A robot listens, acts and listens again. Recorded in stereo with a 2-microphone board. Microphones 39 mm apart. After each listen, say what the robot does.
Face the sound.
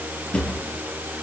Turn 30° left.
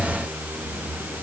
Keep listening.
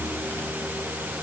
Keep listening.
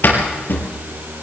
Turn 120° left.
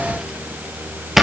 Turn 10° right.
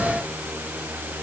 Keep listening.
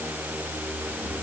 Keep listening.
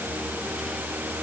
I heard a drawer from this way, but can't make it out now.